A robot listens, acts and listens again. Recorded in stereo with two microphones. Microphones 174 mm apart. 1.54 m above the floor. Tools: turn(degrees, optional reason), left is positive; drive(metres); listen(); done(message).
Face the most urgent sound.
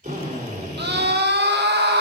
turn(degrees=-90)
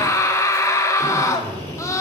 turn(degrees=15, reason="So it is at 15° left.")
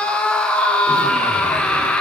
done("Facing the scream.")